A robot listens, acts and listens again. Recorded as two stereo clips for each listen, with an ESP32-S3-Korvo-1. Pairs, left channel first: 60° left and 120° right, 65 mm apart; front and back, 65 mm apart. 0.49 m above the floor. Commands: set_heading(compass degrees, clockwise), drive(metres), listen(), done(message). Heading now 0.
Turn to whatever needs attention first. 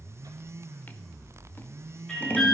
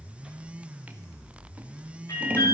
set_heading(20)
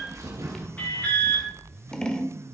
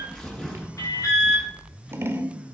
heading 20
done("Facing the alarm.")